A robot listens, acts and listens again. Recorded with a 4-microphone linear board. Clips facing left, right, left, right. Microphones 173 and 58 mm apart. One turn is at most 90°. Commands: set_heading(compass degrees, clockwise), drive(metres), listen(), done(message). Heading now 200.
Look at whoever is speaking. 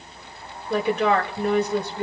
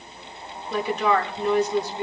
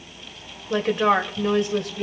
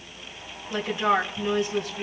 set_heading(135)
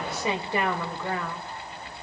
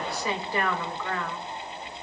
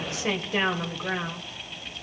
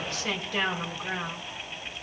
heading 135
set_heading(110)
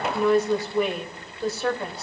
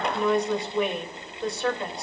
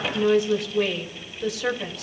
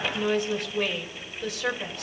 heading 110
done("Facing the woman speaking.")